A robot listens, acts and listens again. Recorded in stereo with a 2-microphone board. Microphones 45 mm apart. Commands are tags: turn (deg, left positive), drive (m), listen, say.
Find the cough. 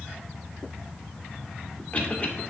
<turn deg="35"/>
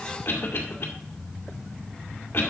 <turn deg="110"/>
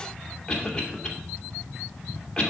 <turn deg="20"/>
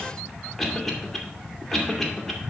<say>Facing the cough, 2 to 4 m away.</say>